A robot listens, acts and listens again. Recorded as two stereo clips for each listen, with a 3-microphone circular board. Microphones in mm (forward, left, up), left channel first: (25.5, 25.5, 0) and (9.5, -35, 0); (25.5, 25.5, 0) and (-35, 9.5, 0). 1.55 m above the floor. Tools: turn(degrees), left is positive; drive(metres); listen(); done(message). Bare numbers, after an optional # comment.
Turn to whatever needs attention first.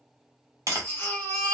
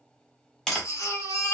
# The baby crying: 25° left.
turn(25)
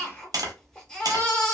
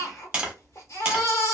done("Found it: a baby crying, straight ahead, 1 to 2 m away.")